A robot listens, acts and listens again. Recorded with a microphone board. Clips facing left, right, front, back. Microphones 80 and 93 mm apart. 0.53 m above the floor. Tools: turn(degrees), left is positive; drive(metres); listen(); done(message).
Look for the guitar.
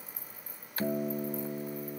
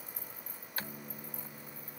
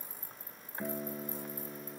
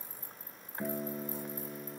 turn(degrees=95)
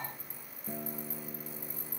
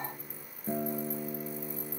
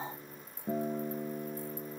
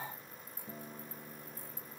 turn(degrees=-30)
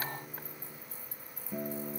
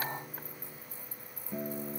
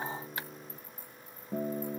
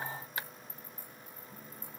done("Found it: a guitar, straight ahead.")